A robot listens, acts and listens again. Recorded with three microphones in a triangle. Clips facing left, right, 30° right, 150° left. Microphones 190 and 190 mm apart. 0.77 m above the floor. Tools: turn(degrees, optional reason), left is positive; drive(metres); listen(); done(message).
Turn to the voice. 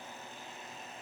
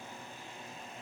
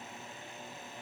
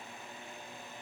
listen()
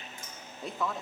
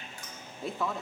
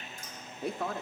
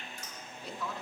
done("Found it: a woman speaking, straight ahead.")